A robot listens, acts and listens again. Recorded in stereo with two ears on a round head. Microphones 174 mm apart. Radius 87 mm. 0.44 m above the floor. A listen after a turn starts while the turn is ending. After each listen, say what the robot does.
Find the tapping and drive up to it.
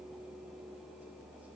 Keep listening.
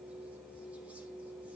Keep listening.
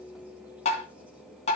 Turn 35° left.
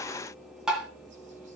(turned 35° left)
Drive 1.0 m forward.
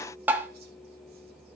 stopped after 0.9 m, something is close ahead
Turn 10° right.
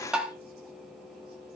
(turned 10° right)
Arrived at the tapping, straight ahead.